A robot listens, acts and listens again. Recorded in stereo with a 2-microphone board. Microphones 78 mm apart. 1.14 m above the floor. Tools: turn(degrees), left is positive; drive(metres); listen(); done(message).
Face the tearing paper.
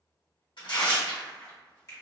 turn(degrees=90)
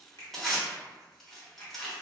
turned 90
done("Found it: tearing paper, straight ahead, 1 to 2 m away.")